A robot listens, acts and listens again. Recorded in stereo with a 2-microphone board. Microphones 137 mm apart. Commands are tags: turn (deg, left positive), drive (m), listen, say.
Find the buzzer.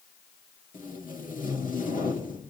<listen/>
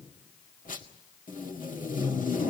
<listen/>
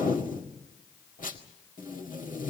<say>I can't make out a buzzer, only tape being pulled.</say>